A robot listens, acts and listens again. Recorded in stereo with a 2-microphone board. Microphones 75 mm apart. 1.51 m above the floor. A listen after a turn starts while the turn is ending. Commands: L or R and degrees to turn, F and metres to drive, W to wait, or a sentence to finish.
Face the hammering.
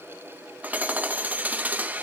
R25
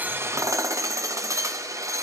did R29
R125
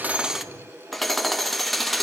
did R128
Facing the hammering.